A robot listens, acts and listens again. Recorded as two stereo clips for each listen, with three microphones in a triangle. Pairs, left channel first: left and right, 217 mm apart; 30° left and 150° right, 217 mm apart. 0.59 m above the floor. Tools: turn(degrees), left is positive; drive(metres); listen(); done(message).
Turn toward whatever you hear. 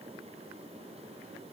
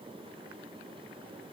listen()
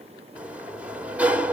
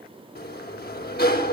done("Facing the sliding door.")